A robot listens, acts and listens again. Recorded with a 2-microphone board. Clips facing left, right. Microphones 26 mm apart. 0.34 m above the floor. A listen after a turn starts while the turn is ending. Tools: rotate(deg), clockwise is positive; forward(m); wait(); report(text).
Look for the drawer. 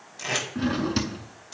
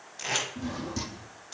rotate(-70)
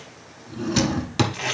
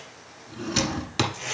report("Found it: a drawer, straight ahead.")